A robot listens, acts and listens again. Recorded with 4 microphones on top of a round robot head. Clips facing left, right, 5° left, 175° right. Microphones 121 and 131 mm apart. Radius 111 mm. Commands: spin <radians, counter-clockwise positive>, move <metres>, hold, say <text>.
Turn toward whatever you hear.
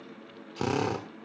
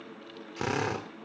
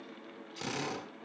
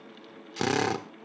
spin 2.88
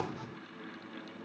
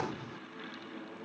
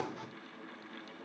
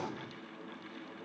hold
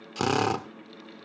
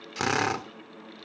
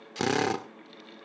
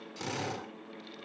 spin 0.35
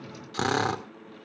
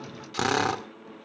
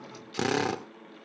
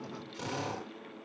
say Found it: a drill, straight ahead, 1 to 2 m away.